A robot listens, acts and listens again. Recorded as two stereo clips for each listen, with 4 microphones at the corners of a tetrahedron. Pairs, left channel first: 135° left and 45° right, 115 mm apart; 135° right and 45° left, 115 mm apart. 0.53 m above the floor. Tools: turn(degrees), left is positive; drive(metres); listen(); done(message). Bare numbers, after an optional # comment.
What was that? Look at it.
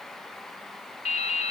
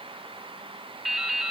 # The dripping: 135° left.
turn(135)
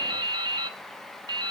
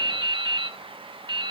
done("Found it: dripping, straight ahead.")